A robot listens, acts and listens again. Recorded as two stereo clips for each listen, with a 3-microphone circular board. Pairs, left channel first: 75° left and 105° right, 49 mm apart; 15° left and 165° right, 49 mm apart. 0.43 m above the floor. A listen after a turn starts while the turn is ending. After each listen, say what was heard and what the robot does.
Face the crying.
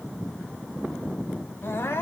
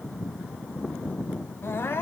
The crying: 50° left. Turn 50° left.
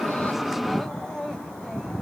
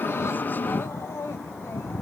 Facing the crying, 2 to 4 m away.